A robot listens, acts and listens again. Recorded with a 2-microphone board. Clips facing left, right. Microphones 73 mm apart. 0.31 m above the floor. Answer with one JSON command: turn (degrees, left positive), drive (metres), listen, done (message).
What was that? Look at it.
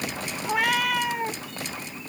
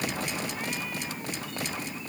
{"turn": 90}
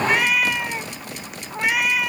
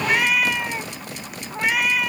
{"done": "Facing the cat meowing."}